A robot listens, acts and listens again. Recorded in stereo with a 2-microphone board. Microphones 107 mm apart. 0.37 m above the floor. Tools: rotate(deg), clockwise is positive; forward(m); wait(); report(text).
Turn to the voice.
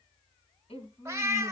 rotate(-65)
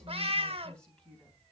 rotate(-10)
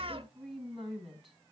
report("Found it: a woman speaking, straight ahead.")